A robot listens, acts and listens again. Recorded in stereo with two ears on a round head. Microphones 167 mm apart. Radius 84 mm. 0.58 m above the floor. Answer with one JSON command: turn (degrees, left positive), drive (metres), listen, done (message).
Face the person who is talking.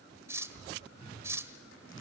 {"listen": true}
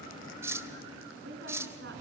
{"turn": -65}
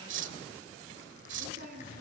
{"turn": -50}
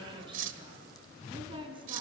{"turn": -25}
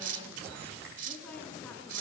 {"listen": true}
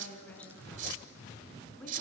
{"turn": 10}
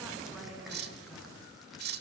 {"listen": true}
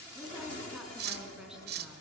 {"done": "Facing the woman speaking."}